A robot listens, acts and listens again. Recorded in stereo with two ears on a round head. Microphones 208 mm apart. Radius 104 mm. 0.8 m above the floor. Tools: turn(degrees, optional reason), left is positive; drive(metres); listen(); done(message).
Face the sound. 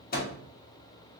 turn(degrees=40, reason="The microwave: about 40° left or 140° left.")
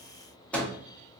done("Facing the microwave, under 1 m away.")